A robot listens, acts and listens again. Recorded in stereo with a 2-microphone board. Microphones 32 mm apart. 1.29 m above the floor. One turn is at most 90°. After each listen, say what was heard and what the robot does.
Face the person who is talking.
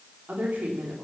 The woman speaking: about 55° right or 125° right. Turn 55° right.
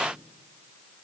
Keep listening.
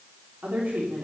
So it is at 65° right. Turn 65° right.
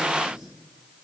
Keep listening.
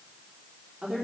The woman speaking is now 20° right. Turn 20° right.
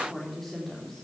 Facing the woman speaking, 2 to 4 m away.